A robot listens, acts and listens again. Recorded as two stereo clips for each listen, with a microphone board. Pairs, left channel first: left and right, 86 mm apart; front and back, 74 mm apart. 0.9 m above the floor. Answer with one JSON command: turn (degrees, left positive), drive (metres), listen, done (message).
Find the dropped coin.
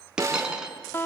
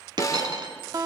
{"turn": -170}
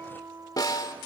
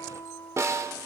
{"done": "I heard a dropped coin from this way, but can't make it out now."}